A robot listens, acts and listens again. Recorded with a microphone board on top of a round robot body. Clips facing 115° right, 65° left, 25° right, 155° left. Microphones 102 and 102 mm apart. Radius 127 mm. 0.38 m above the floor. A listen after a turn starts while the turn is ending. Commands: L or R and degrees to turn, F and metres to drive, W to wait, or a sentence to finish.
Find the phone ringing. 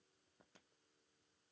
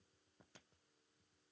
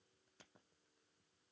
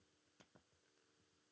W
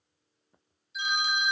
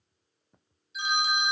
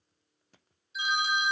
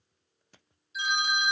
L20
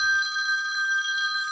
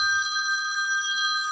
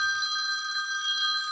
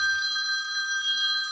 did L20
Facing the phone ringing.